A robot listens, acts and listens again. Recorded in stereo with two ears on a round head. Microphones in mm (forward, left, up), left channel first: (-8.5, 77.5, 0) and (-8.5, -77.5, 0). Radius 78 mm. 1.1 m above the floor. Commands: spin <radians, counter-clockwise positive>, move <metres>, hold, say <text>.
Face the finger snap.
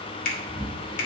spin 0.87
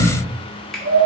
say Found it: a finger snap, straight ahead, 1 to 2 m away.